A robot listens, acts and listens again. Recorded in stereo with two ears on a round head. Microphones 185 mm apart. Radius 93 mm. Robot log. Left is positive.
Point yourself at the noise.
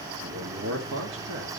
note: The man speaking: about 60° right or 120° right.
cmd yaw -60
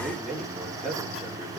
end: Found it: a man speaking, straight ahead.